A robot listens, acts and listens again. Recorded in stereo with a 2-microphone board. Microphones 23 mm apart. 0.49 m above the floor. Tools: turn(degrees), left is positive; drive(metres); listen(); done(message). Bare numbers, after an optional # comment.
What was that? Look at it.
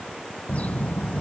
turn(90)
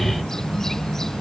# So it is at 15° left.
turn(15)
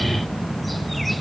done("Found it: a bird, straight ahead.")